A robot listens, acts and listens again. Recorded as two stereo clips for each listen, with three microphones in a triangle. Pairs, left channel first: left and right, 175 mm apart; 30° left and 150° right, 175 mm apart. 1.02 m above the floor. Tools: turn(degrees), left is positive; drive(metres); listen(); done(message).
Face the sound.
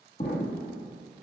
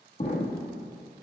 turn(degrees=65)
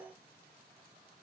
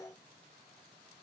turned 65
done("Facing where the explosion came from. I can't hear it now.")